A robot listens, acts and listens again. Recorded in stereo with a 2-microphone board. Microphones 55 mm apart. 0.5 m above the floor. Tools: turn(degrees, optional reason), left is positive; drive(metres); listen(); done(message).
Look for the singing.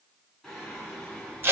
turn(degrees=30)
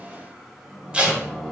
turn(degrees=30)
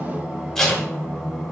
done("Found it: singing, straight ahead.")